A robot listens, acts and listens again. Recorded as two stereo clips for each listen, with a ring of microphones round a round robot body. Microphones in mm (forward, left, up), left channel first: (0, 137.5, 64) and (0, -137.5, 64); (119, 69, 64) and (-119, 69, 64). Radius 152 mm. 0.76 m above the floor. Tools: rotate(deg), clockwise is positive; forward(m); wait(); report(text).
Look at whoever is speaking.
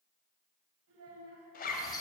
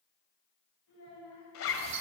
rotate(50)
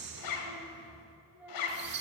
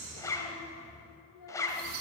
wait()
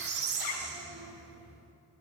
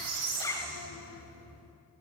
wait()
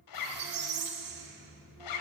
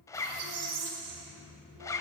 report("I heard a child speaking from this way, but can't make it out now.")